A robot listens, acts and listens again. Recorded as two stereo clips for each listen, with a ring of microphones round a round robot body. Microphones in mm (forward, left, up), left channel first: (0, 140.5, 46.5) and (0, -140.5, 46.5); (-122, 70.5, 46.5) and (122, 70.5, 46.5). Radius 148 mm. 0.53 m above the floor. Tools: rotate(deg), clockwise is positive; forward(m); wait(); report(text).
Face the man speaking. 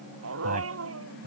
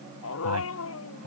rotate(30)
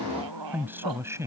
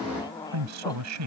rotate(10)
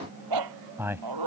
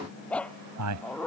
rotate(10)
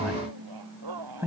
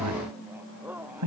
rotate(10)
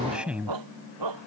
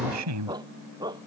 report("Facing the man speaking.")